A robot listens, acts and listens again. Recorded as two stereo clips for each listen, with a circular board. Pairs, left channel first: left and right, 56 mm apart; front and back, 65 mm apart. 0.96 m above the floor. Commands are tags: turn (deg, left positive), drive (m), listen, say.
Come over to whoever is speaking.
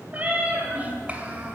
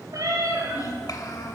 <turn deg="-25"/>
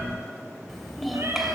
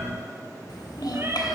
<drive m="1.0"/>
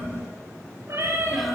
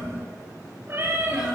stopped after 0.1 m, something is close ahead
<listen/>
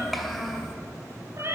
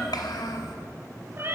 <say>Something is in my way. I am facing the child speaking but have not reached it.</say>